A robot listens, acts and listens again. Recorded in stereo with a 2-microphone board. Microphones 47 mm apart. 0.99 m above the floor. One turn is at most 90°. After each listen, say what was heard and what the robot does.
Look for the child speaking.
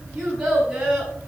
Turn 30° right.
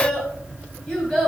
So it is at 10° left. Turn 10° left.
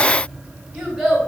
Facing the child speaking, 2 to 4 m away.